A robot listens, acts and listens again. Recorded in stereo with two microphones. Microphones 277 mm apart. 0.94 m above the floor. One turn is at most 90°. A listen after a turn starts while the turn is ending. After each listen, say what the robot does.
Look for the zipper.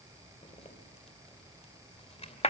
Turn 25° left.
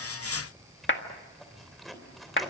Found it: a zipper, straight ahead, 2 to 4 m away.